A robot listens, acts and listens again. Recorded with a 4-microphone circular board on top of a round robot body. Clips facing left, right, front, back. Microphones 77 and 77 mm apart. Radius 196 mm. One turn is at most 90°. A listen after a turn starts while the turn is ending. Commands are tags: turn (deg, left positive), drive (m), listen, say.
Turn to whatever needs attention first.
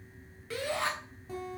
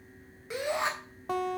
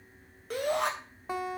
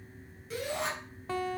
<turn deg="-20"/>
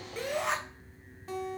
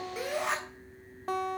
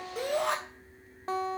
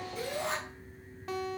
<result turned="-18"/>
<say>Found it: a shout, straight ahead.</say>